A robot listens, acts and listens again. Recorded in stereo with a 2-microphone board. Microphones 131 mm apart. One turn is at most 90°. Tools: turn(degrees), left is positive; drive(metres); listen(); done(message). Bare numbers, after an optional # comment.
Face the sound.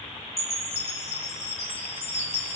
# The chime: about 60° left or 120° left.
turn(60)
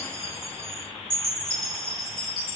done("Found it: a chime, straight ahead.")